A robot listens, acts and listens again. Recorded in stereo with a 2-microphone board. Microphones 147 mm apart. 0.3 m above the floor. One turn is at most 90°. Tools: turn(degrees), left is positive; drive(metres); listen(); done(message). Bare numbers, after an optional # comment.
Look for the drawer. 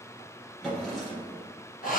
turn(30)
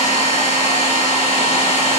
listen()
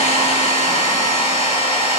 listen()
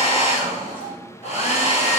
# So it is at 145° left.
turn(90)
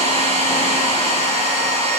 # Nothing new. It was at 55° left.
turn(55)
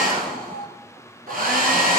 listen()
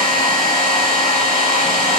done("Facing where the drawer came from. I can't hear it now.")